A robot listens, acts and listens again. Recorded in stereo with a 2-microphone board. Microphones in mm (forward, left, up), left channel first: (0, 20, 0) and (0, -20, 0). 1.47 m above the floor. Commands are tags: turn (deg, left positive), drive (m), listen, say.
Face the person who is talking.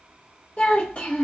<turn deg="30"/>
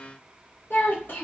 <turn deg="115"/>
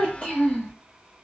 <turn deg="35"/>
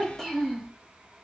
<turn deg="15"/>
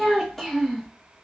<say>Found it: a child speaking, straight ahead.</say>